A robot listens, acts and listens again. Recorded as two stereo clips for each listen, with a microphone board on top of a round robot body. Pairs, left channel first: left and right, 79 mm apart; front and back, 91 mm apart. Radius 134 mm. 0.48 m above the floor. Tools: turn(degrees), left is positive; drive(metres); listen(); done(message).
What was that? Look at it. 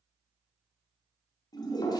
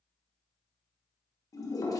turn(degrees=50)
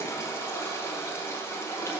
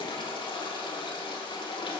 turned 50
turn(degrees=30)
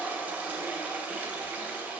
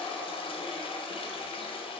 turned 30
turn(degrees=-20)
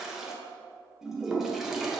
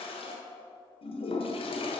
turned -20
done("Found it: a toilet flushing, straight ahead.")